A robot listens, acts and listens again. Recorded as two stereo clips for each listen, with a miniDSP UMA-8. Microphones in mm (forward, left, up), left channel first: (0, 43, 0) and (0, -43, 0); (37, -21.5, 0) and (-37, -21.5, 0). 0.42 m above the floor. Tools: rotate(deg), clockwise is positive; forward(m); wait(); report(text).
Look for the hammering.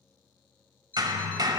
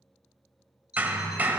rotate(115)
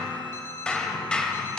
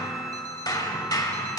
rotate(-15)
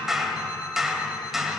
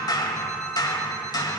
report("Facing the hammering.")